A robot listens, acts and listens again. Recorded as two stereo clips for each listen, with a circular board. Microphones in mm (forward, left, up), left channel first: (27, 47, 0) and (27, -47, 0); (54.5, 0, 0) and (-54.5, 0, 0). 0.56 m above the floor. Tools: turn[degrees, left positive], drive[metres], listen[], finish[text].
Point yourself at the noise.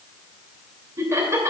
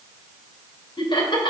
Thought: The laughter: 35° right.
Action: turn[-35]
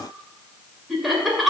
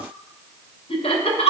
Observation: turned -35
Action: finish[Found it: laughter, straight ahead.]